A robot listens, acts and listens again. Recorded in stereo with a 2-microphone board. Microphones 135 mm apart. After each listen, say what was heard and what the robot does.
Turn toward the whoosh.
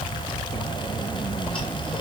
Keep listening.
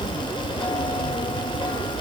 Keep listening.
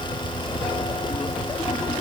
I can't make out a whoosh.